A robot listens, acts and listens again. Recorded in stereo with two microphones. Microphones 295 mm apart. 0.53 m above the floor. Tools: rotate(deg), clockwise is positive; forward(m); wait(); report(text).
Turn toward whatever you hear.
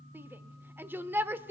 rotate(30)
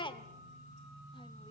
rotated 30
rotate(-20)
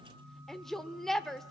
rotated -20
report("Facing the shout.")